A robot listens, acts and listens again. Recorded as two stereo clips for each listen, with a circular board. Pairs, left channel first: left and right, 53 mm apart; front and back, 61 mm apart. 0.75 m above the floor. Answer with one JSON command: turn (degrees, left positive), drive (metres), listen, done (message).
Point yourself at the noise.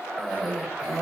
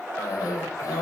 {"done": "Found it: a cough, straight ahead, 1 to 2 m away."}